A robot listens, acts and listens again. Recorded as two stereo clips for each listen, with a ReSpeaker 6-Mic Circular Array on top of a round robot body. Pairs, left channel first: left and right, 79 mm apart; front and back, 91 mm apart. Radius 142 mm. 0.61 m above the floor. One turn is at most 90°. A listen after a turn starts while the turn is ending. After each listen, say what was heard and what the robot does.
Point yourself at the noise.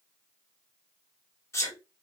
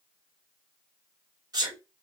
The sneeze: 140° left. Turn 90° left.
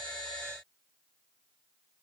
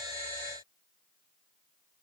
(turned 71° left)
Nothing new. It was at 70° left. Turn 70° left.
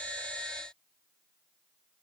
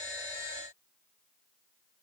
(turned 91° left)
Nothing new. It was at 20° right. Turn 20° right.
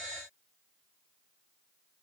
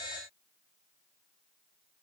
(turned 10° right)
Nothing new. It was at 10° right. Turn 10° right.
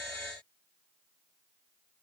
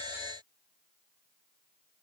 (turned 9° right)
Facing where the sneeze came from. I can't hear it now.